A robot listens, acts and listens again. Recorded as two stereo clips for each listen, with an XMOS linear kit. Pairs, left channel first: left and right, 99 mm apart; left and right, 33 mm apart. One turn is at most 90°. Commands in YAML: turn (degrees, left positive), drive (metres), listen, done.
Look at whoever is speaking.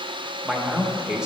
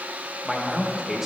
turn: -30
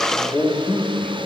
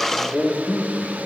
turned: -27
turn: 20
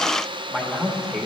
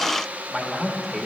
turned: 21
done: "Found it: a man speaking, straight ahead."